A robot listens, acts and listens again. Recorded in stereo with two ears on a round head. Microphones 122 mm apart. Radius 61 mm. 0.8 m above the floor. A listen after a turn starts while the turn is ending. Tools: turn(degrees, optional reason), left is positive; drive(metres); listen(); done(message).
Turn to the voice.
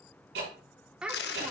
turn(degrees=-30)
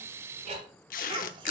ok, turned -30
turn(degrees=-145, reason="So it is at 145° right.")
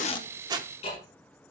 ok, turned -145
listen()
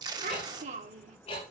turn(degrees=-50, reason="The child speaking is now 50° right.")
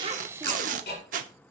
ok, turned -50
listen()
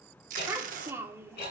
turn(degrees=-15, reason="The child speaking is now 15° right.")
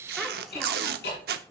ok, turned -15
listen()
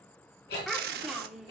done("Found it: a child speaking, straight ahead, 1 to 2 m away.")